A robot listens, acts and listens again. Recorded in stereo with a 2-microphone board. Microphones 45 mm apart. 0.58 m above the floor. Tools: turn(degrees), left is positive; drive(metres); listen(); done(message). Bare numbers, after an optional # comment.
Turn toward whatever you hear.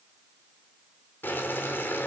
# The boiling: about 50° left or 130° left.
turn(50)
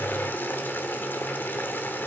# So it is at 70° left.
turn(70)
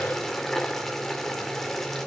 # The boiling is now 10° left.
turn(10)
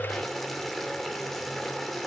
done("Found it: boiling, straight ahead, 2 to 4 m away.")